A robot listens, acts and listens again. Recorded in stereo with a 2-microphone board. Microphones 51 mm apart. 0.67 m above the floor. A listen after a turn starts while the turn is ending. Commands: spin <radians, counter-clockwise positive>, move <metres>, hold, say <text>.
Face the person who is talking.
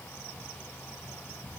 hold
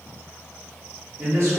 spin -1.05
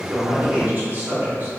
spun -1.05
spin -0.79
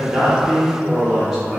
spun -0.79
say Facing the man speaking.